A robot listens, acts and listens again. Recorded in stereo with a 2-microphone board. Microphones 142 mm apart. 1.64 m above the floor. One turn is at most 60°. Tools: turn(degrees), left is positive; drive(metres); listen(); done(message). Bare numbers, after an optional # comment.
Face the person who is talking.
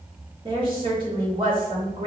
# The woman speaking: about 35° right or 145° right.
turn(-35)
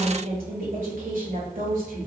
# So it is at 105° right.
turn(-60)
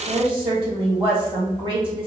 # The woman speaking is now 35° right.
turn(-35)
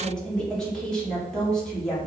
done("Facing the woman speaking.")